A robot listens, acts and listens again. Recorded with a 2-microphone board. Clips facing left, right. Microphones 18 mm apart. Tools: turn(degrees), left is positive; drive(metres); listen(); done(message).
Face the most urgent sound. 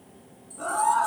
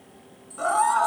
turn(degrees=-70)
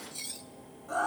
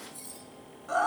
turn(degrees=-40)
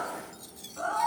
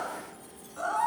turn(degrees=-10)
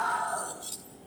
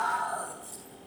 done("Facing the scream, over 4 m away.")